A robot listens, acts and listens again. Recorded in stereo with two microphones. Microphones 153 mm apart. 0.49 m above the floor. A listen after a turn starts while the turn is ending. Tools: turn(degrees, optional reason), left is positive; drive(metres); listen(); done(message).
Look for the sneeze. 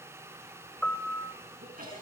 turn(degrees=-65, reason="The sneeze: about 65° right or 115° right.")
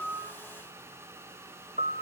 listen()
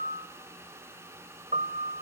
done("I heard a sneeze, but can't make it out now. It was about straight ahead or 50° right.")